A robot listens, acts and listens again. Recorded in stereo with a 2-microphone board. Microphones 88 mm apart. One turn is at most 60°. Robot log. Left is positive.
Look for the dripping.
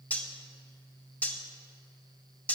cmd idle
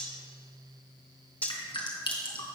note: The dripping: about 70° left or 110° left.
cmd yaw +60
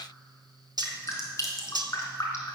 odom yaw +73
note: So it is at 35° left.
cmd yaw +35
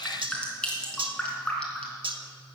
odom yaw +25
note: The dripping is now 10° left.
cmd yaw +10
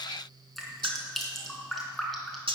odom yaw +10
end: Found it: dripping, straight ahead.